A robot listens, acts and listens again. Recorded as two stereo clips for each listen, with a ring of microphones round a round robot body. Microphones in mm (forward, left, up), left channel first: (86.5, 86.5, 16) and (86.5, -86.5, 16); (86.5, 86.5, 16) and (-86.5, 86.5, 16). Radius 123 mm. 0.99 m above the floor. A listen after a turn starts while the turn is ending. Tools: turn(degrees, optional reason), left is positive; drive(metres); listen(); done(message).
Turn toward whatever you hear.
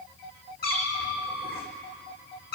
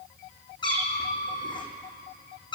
turn(degrees=65, reason="The cat meowing: 65° left.")
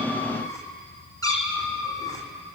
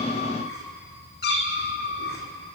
turn(degrees=20, reason="The cat meowing is now 20° left.")
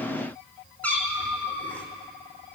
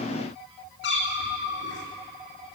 turn(degrees=10, reason="The cat meowing is now 10° left.")
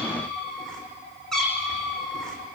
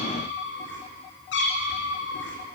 done("Facing the cat meowing.")